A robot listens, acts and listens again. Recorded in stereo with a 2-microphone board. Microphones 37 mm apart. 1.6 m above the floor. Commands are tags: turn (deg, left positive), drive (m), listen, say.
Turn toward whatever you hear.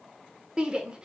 <turn deg="-25"/>
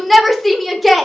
<say>Found it: a shout, straight ahead.</say>